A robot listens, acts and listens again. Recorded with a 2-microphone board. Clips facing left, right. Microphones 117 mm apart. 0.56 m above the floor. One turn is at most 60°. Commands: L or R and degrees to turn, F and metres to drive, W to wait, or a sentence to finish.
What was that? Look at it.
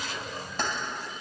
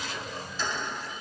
L60
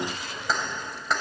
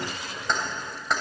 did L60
Facing the keys jangling.